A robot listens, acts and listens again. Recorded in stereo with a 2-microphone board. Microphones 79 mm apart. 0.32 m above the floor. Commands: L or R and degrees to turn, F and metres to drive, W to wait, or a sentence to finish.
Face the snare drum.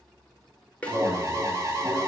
L15
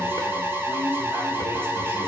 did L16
W
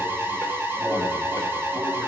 W
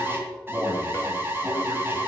I heard a snare drum, but can't make it out now. It was about straight ahead or 150° left.